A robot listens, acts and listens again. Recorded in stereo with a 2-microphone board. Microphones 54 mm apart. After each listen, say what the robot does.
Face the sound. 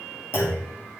Turn 50° left.
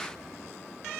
Keep listening.
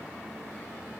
I heard a clunk, but can't make it out now. It was about straight ahead or 80° left.